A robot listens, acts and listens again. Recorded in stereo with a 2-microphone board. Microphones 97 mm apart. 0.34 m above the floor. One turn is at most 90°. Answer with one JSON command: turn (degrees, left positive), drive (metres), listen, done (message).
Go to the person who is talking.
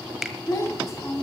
{"turn": 30}
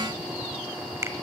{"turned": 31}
{"listen": true}
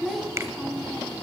{"drive": 1.0}
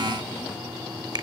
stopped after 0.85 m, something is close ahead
{"listen": true}
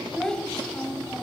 {"turn": 10}
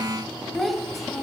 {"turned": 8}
{"done": "I am next to the child speaking."}